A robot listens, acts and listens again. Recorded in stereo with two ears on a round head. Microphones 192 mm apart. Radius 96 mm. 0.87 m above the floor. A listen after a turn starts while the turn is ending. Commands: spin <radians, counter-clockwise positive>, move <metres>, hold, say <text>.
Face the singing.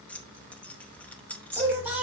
spin -0.52
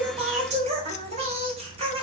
spin -2.62
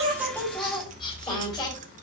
spin 0.35
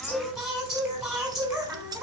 say Facing the singing.